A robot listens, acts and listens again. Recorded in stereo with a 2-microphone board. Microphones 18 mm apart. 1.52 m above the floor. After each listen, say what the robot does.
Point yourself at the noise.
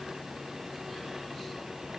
Keep listening.
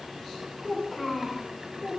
Turn 30° right.
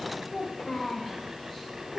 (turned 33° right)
Turn 15° left.
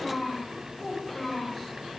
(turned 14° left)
Found it: a child speaking, straight ahead.